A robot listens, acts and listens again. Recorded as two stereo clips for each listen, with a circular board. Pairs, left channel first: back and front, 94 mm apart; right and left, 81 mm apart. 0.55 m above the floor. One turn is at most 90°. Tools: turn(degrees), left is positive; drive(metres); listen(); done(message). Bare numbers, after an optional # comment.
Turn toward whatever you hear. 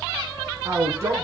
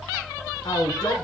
# The man speaking: 60° right.
turn(-60)
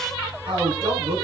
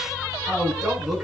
done("Facing the man speaking, over 4 m away.")